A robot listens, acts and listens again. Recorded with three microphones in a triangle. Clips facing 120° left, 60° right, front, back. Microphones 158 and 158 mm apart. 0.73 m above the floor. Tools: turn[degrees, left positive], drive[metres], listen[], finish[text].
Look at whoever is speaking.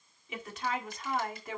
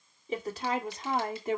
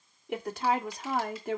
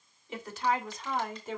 Action: finish[Found it: a woman speaking, straight ahead.]